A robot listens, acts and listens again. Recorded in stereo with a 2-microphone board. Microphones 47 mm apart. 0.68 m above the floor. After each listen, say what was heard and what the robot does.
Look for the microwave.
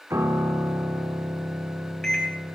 Turn 30° left.
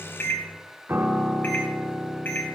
So it is at 135° left. Turn 135° left.
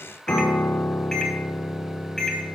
The microwave is now 10° left. Turn 10° left.
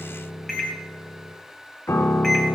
Facing the microwave, 2 to 4 m away.